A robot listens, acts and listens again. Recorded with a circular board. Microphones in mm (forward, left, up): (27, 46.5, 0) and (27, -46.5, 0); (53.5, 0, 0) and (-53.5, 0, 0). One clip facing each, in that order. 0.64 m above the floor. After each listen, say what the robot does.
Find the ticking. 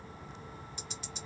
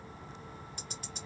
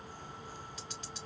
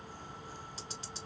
Turn 125° right.
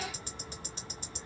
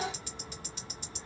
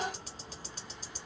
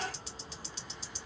Turn 40° left.
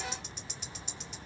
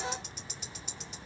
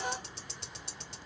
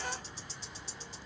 Facing the ticking, 1 to 2 m away.